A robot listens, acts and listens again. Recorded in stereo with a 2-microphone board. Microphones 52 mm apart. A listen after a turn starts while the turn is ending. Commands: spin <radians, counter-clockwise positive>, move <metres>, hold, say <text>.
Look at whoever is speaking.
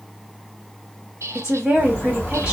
spin -0.26
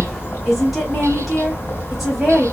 hold
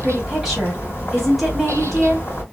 hold
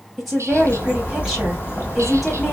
say Found it: a woman speaking, straight ahead.